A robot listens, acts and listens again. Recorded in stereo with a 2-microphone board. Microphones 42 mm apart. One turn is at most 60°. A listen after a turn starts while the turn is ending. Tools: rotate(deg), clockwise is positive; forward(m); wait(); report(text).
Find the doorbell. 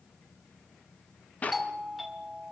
rotate(-30)
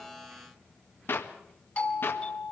rotate(-60)
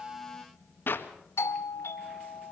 rotate(-60)
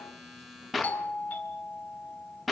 rotate(-35)
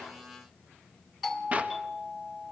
report("Facing the doorbell.")